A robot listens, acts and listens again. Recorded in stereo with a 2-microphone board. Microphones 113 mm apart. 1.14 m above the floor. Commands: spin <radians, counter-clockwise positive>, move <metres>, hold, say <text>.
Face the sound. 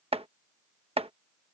spin -1.05
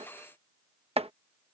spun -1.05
spin -1.05
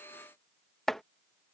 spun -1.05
say Found it: chopping, straight ahead.